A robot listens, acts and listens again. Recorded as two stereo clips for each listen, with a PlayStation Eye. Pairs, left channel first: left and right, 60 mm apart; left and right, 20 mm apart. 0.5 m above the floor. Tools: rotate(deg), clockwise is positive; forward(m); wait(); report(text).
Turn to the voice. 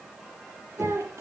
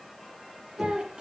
rotate(50)
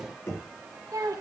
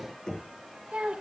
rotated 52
rotate(75)
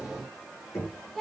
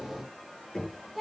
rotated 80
report("Found it: a child speaking, straight ahead.")